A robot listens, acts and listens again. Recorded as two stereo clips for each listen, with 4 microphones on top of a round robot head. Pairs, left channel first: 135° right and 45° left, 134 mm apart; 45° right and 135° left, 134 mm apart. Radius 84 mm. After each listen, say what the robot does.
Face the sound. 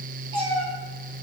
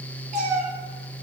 Turn 100° left.
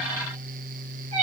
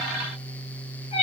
Found it: a cat meowing, straight ahead, 2 to 4 m away.